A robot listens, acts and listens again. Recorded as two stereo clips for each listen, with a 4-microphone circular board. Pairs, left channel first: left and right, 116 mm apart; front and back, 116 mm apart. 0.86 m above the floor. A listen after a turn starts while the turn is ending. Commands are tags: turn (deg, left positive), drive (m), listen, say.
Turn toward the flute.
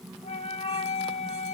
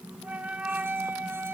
<turn deg="105"/>
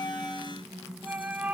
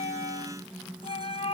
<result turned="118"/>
<turn deg="-15"/>
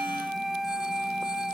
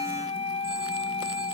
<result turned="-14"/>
<say>Facing the flute.</say>